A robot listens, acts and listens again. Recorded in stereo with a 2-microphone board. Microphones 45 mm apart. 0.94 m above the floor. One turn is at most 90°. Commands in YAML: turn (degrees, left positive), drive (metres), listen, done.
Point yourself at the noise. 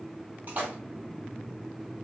turn: -40
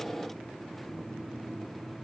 listen: true
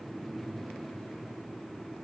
done: "I heard a splash, but can't make it out now. It was about straight ahead or 100° right."